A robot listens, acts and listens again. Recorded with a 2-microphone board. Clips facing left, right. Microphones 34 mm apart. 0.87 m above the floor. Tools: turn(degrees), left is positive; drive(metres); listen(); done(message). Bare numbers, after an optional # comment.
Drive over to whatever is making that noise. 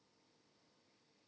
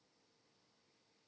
listen()
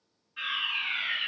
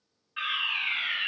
# The fire alarm: about 35° right or 145° right.
turn(-35)
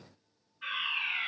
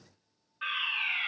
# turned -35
# So it is at 105° right.
turn(-105)
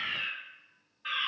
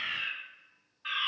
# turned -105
drive(1.0)
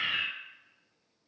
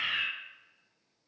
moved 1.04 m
drive(1.0)
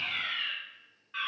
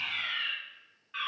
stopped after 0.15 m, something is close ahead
done("Arrived at the fire alarm, straight ahead.")